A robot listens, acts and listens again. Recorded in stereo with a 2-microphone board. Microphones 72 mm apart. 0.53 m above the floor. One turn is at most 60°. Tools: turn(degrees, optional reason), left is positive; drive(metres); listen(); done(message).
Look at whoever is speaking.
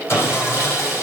listen()
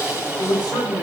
turn(degrees=60, reason="The man speaking: about 65° left or 115° left.")
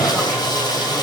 listen()
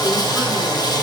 listen()
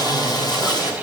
done("I heard a man speaking, but can't make it out now. It was about 5° left or 55° left.")